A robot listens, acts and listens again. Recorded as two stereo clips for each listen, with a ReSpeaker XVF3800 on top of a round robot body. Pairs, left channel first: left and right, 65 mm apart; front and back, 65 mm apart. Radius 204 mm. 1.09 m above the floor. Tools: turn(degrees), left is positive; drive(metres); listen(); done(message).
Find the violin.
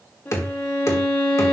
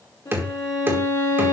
turn(degrees=30)
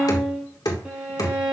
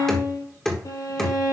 turn(degrees=-15)
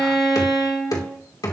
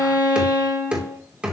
turn(degrees=10)
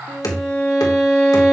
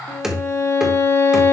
done("Found it: a violin, straight ahead.")